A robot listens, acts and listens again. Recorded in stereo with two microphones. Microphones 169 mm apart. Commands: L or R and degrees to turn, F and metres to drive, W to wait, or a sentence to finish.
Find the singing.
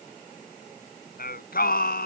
L65
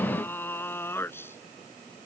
L15
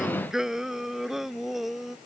Found it: singing, straight ahead.